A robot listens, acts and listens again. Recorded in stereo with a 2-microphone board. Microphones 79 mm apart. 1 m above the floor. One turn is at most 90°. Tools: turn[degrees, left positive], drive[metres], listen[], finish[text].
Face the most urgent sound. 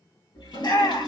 Thought: The shout: about 65° left or 115° left.
Action: turn[65]
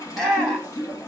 Action: finish[Found it: a shout, straight ahead, 1 to 2 m away.]